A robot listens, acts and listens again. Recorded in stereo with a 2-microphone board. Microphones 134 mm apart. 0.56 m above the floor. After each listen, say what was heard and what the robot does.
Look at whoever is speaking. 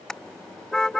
Keep listening.
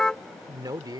The man speaking: about 30° right or 150° right. Turn 30° right.
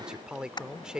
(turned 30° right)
Found it: a man speaking, straight ahead.